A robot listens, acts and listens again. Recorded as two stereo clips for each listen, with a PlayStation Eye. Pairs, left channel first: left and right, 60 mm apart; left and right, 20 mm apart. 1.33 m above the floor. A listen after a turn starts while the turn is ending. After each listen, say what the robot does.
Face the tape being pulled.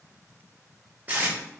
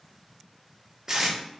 Turn 25° right.
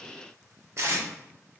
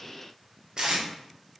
Turn 125° right.
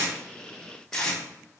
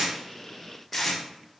Turn 10° left.
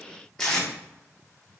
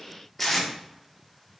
Facing the tape being pulled, 1 to 2 m away.